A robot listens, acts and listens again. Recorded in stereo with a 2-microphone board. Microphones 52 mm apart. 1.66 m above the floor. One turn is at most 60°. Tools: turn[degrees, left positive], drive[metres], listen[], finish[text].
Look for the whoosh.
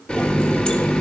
Action: listen[]
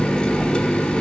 Action: listen[]
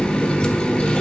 Action: finish[I can't make out a whoosh, only a running tap.]